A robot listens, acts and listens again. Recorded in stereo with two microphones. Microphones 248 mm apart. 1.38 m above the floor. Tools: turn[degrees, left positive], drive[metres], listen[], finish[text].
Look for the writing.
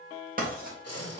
Thought: The writing: about 35° right or 145° right.
Action: turn[-35]
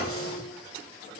Action: listen[]
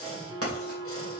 Thought: So it is at 110° right.
Action: turn[-110]
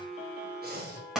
Action: finish[Facing the writing.]